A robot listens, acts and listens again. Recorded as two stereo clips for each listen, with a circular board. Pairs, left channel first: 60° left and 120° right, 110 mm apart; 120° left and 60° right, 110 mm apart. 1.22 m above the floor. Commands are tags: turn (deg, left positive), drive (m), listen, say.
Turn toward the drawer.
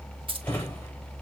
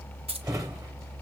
<say>Facing the drawer, 1 to 2 m away.</say>